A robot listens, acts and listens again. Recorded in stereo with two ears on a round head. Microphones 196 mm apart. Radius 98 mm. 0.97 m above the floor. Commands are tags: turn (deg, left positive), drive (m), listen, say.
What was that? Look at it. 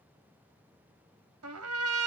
<turn deg="-90"/>
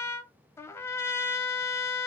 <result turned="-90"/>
<turn deg="10"/>
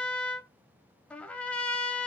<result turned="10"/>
<say>Found it: a trumpet, straight ahead.</say>